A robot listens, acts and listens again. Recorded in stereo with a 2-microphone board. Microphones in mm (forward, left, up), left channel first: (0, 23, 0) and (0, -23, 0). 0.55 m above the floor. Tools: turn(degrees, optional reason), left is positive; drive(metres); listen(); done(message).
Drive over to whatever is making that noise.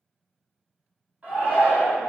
turn(degrees=-35, reason="The shout: about 35° right or 145° right.")
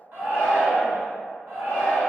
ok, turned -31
turn(degrees=-110, reason="So it is at 110° right.")
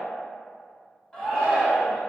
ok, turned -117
turn(degrees=10, reason="The shout is now 10° left.")
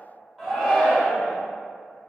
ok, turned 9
drive(metres=1.0)
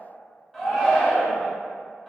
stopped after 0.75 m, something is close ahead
done("I am next to the shout.")